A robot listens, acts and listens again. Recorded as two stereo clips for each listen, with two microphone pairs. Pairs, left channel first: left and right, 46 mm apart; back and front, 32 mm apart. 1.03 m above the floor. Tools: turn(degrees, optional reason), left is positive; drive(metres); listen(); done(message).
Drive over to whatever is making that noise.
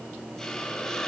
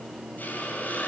turn(degrees=170, reason="The hiss: 170° left.")
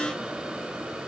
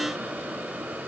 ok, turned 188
turn(degrees=-20, reason="The hiss is now 20° right.")
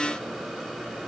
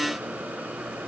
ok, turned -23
listen()
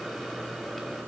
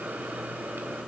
listen()
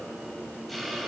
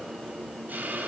drive(metres=1.0)
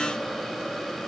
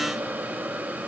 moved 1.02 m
drive(metres=1.0)
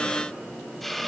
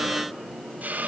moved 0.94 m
drive(metres=1.0)
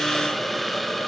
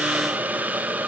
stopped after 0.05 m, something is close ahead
done("Arrived at the hiss, straight ahead.")